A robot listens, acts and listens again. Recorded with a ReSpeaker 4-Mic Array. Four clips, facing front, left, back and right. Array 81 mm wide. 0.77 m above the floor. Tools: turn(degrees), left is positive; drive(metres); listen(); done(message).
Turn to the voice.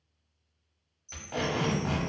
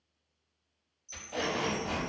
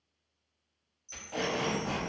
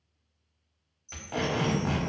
turn(degrees=-175)
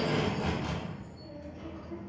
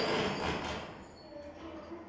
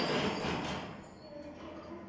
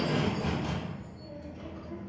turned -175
turn(degrees=-55)
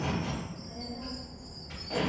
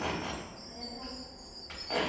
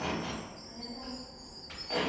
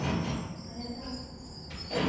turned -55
done("Facing the child speaking, 1 to 2 m away.")